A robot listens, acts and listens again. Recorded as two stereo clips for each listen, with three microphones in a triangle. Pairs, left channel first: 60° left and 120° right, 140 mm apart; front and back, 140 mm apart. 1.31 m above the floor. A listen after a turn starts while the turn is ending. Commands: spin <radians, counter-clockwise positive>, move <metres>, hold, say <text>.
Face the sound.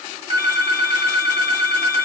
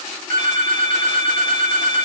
spin -3.05
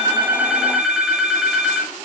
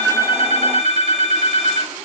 spin -0.61
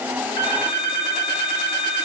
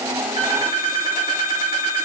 say Found it: a phone ringing, straight ahead, 2 to 4 m away.